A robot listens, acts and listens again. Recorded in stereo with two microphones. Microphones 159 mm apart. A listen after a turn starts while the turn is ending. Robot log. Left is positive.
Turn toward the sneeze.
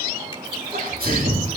note: The sneeze: about 70° right or 110° right.
cmd yaw -70
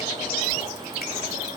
cmd idle
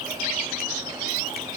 end: I heard a sneeze, but can't make it out now. It was about straight ahead or 40° right.